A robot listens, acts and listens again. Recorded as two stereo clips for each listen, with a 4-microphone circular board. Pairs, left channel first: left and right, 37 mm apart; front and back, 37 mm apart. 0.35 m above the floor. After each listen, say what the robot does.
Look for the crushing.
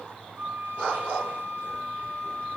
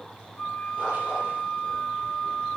Keep listening.
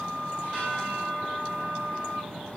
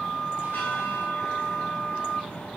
Keep listening.
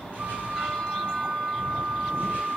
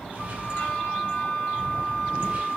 I can't make out crushing, only a flute and a bell.